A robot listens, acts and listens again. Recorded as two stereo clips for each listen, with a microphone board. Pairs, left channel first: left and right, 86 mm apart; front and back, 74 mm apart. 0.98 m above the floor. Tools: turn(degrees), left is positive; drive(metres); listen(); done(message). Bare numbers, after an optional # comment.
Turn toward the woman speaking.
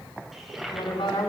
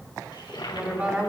# The woman speaking: 105° left.
turn(105)
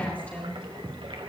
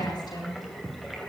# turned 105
# The woman speaking is now 15° left.
turn(15)
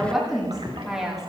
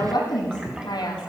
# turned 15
done("Found it: a woman speaking, straight ahead, over 4 m away.")